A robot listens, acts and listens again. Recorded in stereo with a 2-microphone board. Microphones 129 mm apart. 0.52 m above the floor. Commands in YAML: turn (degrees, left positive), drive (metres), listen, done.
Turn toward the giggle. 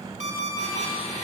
listen: true
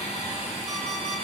listen: true
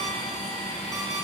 done: "I can't make out a giggle to turn to."